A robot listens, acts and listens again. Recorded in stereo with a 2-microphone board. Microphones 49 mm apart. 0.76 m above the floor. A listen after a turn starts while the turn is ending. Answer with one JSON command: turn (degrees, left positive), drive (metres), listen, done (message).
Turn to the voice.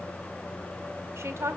{"turn": -65}
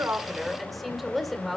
{"done": "Facing the woman speaking, 1 to 2 m away."}